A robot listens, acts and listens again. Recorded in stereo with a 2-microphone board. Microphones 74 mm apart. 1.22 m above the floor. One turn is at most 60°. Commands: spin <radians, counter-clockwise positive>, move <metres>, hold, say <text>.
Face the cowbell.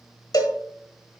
spin 1.05
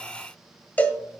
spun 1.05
spin 0.44
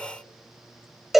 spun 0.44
say Found it: a cowbell, straight ahead.